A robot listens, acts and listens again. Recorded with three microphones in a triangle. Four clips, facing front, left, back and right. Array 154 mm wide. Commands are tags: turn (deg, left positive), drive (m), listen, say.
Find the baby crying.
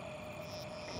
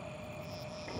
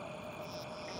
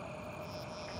<listen/>
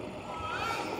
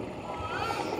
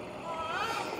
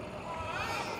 <turn deg="-170"/>
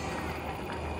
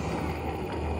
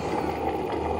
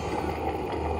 <listen/>
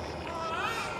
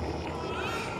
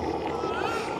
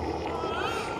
<turn deg="-45"/>
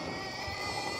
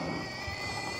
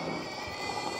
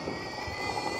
<say>Found it: a baby crying, straight ahead.</say>